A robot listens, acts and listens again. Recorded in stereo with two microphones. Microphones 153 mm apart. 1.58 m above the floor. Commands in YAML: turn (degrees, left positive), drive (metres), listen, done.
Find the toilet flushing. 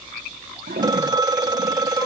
turn: -90
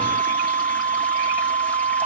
listen: true
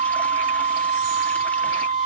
listen: true
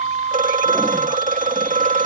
done: "Facing where the toilet flushing came from. I can't hear it now."